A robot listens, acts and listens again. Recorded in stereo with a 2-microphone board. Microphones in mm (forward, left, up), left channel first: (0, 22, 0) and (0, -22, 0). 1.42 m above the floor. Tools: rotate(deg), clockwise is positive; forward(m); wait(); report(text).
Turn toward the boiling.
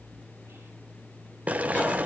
rotate(35)
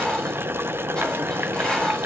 rotate(105)
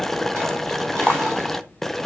rotate(-10)
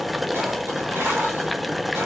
report("Facing the boiling.")